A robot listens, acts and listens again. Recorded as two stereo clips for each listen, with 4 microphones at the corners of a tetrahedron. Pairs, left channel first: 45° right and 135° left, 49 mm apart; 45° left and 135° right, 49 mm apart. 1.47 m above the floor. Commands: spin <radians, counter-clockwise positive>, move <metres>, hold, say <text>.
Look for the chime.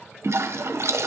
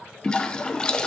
hold
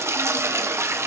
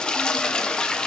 hold
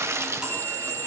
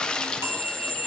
spin -2.62
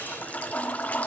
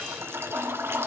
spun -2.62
hold
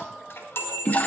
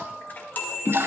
spin -0.17
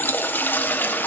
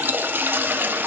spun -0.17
hold
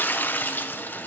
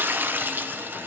hold
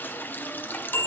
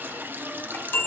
say Facing the chime, 2 to 4 m away.